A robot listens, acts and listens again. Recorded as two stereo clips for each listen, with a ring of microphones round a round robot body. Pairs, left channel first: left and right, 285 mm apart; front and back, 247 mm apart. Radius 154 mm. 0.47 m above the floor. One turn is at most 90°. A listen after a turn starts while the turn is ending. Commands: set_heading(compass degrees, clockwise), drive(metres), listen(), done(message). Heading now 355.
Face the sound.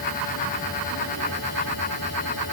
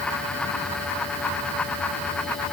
listen()
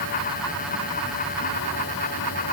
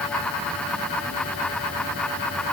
listen()
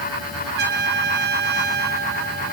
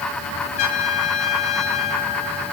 set_heading(25)
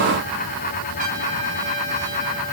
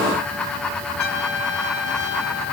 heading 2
set_heading(27)
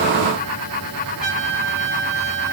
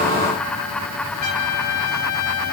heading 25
done("Found it: a trumpet, straight ahead, over 4 m away.")